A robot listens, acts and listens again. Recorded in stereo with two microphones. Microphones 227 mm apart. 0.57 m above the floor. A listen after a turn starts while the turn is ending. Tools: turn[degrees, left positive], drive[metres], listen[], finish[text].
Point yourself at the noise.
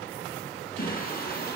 Thought: The singing: about 45° left or 135° left.
Action: turn[45]
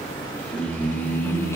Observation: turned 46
Thought: So it is at 10° left.
Action: turn[10]
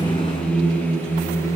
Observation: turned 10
Thought: The singing is now 10° left.
Action: turn[10]
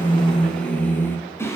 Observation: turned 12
Thought: The singing is now 10° left.
Action: turn[10]
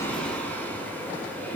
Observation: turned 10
Thought: The singing is now 10° left.
Action: turn[10]
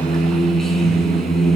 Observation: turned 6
Action: finish[Facing the singing, 2 to 4 m away.]